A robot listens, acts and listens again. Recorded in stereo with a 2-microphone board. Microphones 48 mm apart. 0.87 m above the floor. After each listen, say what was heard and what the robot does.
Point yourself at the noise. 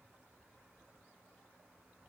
Keep listening.
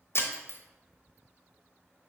The breaking glass: about 55° left or 125° left. Turn 55° left.
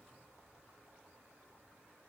Keep listening.
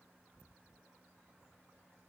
I heard breaking glass, but can't make it out now. It was about straight ahead or 70° left.